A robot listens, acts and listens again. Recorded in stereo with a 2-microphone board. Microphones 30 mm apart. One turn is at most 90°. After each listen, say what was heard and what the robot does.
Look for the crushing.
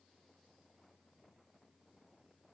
Keep listening.
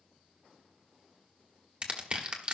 The crushing: about 35° right or 145° right. Turn 35° right.
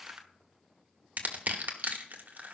So it is at 110° right. Turn 90° right.
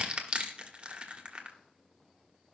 The crushing is now 35° right. Turn 35° right.
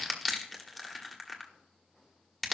Facing the crushing, 1 to 2 m away.